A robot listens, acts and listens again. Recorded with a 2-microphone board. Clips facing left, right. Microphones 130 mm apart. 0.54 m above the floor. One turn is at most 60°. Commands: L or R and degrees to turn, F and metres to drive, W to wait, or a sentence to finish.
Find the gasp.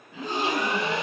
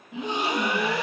R20
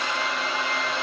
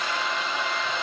W
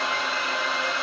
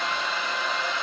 I heard a gasp, but can't make it out now. It was about straight ahead or 140° right.